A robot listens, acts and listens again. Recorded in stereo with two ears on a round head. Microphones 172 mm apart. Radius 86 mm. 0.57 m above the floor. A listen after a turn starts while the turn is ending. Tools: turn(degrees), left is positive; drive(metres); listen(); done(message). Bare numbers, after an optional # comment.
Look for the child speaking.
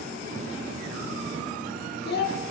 # The child speaking: about 55° left or 125° left.
turn(55)
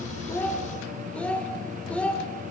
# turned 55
# So it is at 10° left.
turn(10)
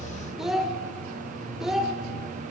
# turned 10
done("Facing the child speaking, 1 to 2 m away.")